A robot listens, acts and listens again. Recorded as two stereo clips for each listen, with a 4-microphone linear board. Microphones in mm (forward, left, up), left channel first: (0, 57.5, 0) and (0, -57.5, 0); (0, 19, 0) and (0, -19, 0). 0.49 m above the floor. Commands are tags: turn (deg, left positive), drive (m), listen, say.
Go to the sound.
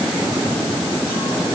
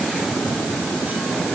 <listen/>
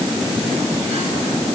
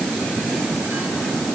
<listen/>
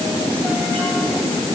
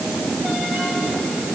<say>I can't make out anything to turn to.</say>